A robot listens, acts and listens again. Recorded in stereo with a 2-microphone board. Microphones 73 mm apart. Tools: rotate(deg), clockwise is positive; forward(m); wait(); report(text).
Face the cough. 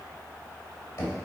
wait()
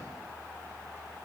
wait()
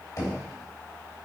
report("I can't make out a cough to turn to.")